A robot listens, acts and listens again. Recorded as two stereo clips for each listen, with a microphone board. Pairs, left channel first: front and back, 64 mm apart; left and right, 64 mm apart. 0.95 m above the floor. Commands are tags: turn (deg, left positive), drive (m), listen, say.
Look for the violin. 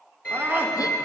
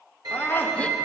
<turn deg="-70"/>
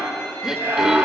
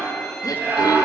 <listen/>
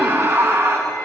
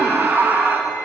<listen/>
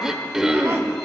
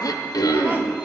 <say>I heard a violin from this way, but can't make it out now.</say>